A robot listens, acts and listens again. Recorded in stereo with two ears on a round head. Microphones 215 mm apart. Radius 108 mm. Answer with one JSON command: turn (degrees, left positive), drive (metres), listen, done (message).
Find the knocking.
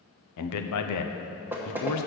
{"turn": -30}
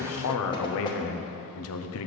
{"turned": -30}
{"listen": true}
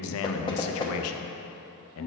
{"turn": 20}
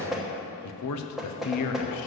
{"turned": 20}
{"done": "Facing the knocking, 1 to 2 m away."}